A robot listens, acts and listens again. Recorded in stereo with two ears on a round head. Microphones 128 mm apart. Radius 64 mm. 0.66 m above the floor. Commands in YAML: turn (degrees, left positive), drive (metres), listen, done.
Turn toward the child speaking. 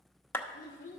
turn: 60
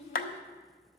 turn: 50
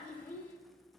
turn: 15
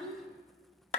done: "Facing the child speaking, 1 to 2 m away."